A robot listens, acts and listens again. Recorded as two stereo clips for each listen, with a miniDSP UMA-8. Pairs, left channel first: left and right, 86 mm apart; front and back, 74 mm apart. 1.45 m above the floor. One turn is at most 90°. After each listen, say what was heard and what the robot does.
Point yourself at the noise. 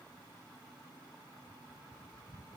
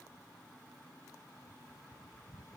Keep listening.
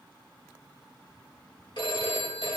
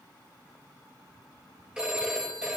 The phone ringing: 100° left. Turn 90° left.
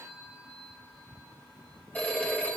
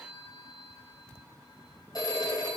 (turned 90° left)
The phone ringing is now 20° left. Turn 20° left.
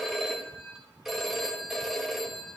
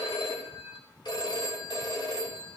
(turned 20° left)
Found it: a phone ringing, straight ahead, 2 to 4 m away.